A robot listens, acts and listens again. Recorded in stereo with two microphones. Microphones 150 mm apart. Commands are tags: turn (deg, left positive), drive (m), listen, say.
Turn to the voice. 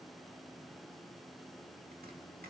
<listen/>
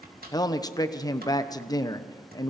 <turn deg="25"/>
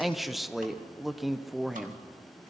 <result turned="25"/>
<say>Facing the man speaking, 1 to 2 m away.</say>